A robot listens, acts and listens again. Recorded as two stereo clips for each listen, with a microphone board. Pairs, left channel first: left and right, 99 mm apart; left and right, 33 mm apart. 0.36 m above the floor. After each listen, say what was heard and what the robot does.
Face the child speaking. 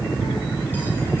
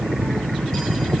Keep listening.
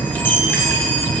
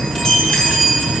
Keep listening.
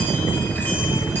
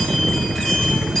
I can't make out a child speaking to turn to.